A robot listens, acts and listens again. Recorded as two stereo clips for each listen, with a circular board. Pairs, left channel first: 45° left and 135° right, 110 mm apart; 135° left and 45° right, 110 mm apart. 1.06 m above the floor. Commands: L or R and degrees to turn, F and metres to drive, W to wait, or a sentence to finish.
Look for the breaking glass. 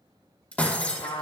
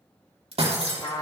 R30
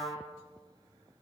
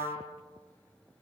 I heard breaking glass from this way, but can't make it out now.